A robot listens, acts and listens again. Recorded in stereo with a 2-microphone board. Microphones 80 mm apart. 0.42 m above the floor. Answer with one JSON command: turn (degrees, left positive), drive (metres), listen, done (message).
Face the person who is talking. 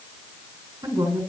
{"turn": -55}
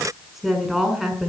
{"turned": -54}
{"done": "Found it: a woman speaking, straight ahead, over 4 m away."}